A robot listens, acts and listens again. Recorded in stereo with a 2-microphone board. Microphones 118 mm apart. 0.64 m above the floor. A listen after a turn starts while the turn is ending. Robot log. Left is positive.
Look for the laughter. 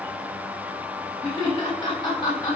note: The laughter: about 40° left or 140° left.
cmd yaw +40
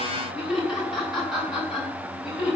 end: Facing the laughter.